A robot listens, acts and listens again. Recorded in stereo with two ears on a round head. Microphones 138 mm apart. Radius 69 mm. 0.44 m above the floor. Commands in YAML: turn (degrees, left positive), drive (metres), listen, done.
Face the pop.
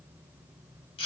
listen: true
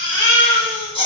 listen: true
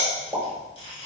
turn: 30
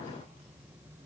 listen: true
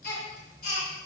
done: "I heard a pop, but can't make it out now. It was about 30° right or 150° left."